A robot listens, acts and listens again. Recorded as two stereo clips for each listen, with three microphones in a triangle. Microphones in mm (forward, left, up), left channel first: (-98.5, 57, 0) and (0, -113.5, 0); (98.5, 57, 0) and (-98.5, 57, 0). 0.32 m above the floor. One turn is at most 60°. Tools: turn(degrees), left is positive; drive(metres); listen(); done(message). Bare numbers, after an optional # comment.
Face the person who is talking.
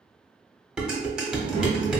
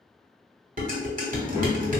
# The child speaking: 110° right.
turn(-60)
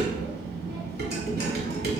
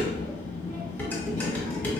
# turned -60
# The child speaking is now 45° right.
turn(-45)
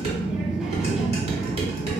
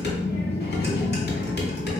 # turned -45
# The child speaking is now 25° left.
turn(25)
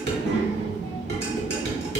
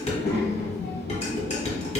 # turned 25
# The child speaking is now 15° right.
turn(-15)
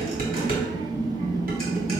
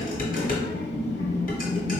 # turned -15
done("Found it: a child speaking, straight ahead.")